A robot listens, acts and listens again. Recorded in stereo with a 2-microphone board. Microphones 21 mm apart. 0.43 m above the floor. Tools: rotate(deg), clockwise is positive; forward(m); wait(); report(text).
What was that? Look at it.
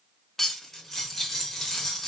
rotate(-15)
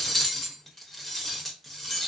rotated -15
report("Found it: cutlery clinking, straight ahead, under 1 m away.")